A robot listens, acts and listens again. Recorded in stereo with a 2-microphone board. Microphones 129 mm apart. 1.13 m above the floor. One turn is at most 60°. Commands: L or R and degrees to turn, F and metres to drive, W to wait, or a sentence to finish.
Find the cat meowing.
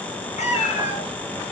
L60
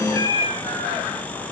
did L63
L30
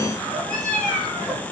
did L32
L10
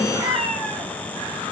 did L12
Facing the cat meowing.